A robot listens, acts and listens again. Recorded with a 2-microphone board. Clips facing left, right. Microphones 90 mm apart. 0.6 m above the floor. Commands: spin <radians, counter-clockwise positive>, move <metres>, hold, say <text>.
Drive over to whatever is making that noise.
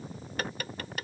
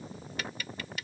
spin 0.87
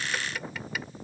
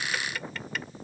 move 1.0
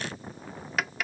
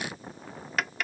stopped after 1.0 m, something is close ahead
say I am next to the tapping.